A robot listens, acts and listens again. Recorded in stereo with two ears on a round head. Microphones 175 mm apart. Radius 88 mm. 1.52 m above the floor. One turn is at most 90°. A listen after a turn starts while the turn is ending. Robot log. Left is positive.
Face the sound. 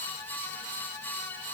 cmd idle
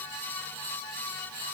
cmd idle
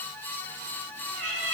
note: The cat meowing: about 65° right or 115° right.
cmd yaw -65
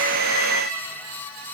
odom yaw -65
end: Found it: a cat meowing, straight ahead.